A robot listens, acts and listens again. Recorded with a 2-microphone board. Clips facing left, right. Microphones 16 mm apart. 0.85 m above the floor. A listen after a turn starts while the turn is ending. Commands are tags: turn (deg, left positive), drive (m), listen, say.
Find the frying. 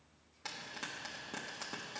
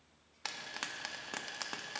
<turn deg="-40"/>
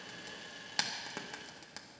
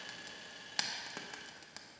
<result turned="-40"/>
<say>Facing the frying.</say>